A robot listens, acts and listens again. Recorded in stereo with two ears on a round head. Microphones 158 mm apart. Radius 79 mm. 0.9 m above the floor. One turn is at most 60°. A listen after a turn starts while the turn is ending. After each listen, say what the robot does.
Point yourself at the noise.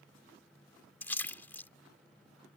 Turn 30° left.
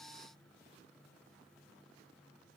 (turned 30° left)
Keep listening.
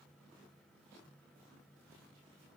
I heard a splash, but can't make it out now. It was about 20° right or 140° left.